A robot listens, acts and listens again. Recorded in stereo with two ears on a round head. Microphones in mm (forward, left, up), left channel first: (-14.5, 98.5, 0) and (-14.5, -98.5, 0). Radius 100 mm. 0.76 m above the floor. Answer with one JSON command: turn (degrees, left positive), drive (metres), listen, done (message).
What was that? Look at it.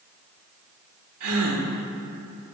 {"turn": -90}
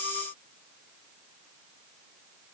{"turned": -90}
{"done": "Facing where the gasp came from. I can't hear it now."}